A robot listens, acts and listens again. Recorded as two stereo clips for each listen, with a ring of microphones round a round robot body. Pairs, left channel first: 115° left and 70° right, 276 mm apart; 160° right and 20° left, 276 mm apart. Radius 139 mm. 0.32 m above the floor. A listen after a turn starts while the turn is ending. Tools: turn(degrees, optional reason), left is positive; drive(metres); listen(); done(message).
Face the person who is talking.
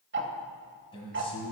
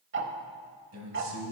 turn(degrees=40, reason="The man speaking: 40° left.")
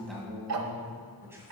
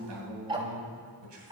turn(degrees=15, reason="The man speaking is now 15° left.")
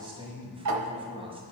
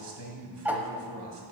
done("Found it: a man speaking, straight ahead, 1 to 2 m away.")